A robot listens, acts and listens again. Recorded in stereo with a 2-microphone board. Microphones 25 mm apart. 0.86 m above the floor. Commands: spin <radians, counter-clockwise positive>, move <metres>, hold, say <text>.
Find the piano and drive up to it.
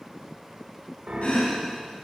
spin -1.22
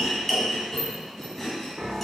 spin -0.79
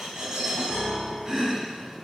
move 1.0
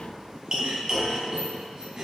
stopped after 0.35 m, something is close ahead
hold
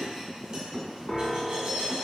say Blocked. The piano is further on, straight ahead.